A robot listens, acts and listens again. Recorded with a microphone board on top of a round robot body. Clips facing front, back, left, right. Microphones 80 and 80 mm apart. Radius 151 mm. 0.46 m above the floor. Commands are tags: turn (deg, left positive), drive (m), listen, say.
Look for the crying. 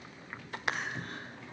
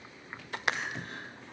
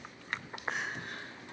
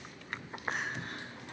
<turn deg="-40"/>
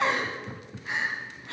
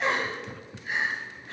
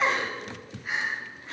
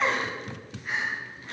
<say>Found it: crying, straight ahead, 2 to 4 m away.</say>